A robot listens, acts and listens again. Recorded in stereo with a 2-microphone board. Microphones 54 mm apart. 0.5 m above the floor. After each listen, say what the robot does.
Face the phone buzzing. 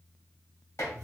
Keep listening.
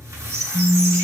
Turn 30° left.
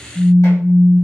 Turn 140° left.
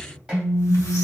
Turn 40° left.
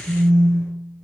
Turn 10° right.
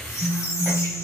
Found it: a phone buzzing, straight ahead.